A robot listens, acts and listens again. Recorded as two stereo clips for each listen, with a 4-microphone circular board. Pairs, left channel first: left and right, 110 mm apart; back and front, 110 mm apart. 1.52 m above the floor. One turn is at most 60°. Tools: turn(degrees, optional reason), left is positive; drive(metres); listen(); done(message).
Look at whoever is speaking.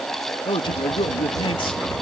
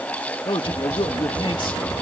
turn(degrees=60, reason="The man speaking: 135° left.")
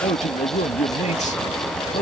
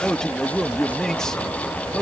turn(degrees=60, reason="The man speaking is now 95° left.")
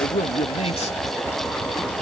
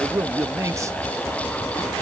turn(degrees=60, reason="The man speaking is now 65° left.")
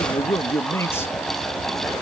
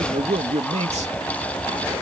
turn(degrees=20, reason="The man speaking is now 20° left.")
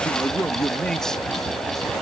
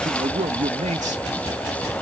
done("Found it: a man speaking, straight ahead.")